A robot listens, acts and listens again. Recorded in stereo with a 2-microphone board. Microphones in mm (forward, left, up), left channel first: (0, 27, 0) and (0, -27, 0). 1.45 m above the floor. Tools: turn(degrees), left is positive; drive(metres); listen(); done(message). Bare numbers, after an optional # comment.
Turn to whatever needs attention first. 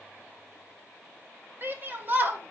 # The shout: about 40° right or 140° right.
turn(-40)
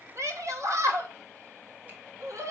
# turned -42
# So it is at 95° right.
turn(-95)
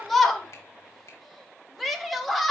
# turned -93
done("Found it: a shout, straight ahead.")